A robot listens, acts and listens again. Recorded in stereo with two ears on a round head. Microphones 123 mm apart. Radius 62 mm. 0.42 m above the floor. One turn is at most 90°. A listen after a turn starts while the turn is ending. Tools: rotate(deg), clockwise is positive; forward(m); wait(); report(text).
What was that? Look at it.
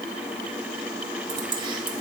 rotate(35)
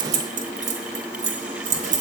rotate(90)
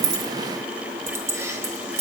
rotate(25)
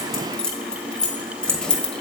report("Found it: keys jangling, straight ahead, 1 to 2 m away.")